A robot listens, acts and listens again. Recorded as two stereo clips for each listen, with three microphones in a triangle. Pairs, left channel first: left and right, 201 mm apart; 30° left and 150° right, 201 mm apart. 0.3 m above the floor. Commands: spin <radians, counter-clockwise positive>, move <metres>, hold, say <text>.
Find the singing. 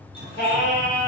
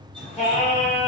spin 1.40
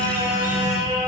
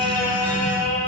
spin -0.17
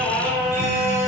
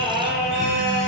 say Found it: singing, straight ahead, 1 to 2 m away.